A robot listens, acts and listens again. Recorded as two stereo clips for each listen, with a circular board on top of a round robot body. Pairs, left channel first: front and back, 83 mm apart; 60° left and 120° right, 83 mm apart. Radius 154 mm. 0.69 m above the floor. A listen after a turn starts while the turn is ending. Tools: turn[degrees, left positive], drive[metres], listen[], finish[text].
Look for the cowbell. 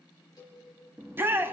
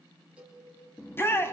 Thought: The cowbell: 40° right.
Action: turn[-40]
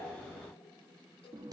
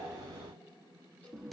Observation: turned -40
Action: listen[]
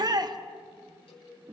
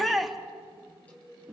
Action: listen[]
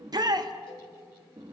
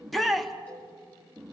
Action: finish[I heard a cowbell from this way, but can't make it out now.]